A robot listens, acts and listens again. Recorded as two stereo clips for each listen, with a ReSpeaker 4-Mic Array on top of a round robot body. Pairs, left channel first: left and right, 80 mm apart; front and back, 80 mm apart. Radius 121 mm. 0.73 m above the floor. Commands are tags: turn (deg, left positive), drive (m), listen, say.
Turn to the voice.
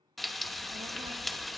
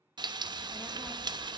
<turn deg="-85"/>
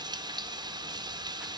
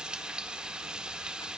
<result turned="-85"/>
<listen/>
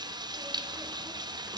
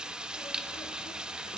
<listen/>
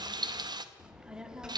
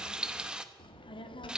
<turn deg="-10"/>
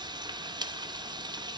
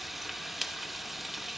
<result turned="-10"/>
<say>Facing the child speaking.</say>